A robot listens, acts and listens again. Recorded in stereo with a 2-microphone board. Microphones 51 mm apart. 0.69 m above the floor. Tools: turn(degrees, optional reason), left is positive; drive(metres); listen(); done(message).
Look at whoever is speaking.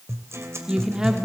turn(degrees=-30)
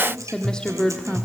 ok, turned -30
turn(degrees=20, reason="So it is at 20° left.")
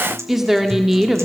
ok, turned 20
done("Facing the woman speaking.")